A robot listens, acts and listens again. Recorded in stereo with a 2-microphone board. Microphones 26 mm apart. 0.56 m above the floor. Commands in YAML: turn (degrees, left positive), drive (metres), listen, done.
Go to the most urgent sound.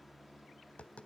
listen: true
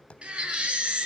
turn: -45
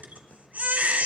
turn: -90
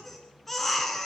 turn: 10
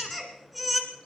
drive: 1.0
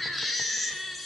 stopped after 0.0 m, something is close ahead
done: "Something is in my way. I am facing the baby crying but have not reached it."